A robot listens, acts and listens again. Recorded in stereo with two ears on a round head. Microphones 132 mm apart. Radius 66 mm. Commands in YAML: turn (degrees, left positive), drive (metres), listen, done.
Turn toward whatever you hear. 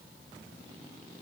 listen: true
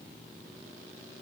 listen: true
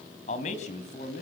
turn: 55
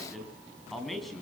done: "Facing the man speaking, over 4 m away."